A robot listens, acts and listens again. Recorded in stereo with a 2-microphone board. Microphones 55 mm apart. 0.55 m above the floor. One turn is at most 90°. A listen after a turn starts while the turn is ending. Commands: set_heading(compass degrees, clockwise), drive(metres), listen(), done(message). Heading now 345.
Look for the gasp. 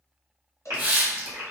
set_heading(50)
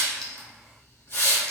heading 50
listen()
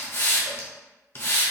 done("I heard a gasp, but can't make it out now. It was about straight ahead or 50° right.")